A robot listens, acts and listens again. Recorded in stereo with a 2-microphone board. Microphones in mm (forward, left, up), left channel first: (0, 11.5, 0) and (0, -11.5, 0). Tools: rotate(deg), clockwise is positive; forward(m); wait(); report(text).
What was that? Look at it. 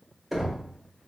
rotate(30)
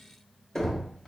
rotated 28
rotate(-20)
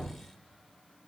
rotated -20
wait()
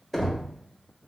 report("Facing the knocking.")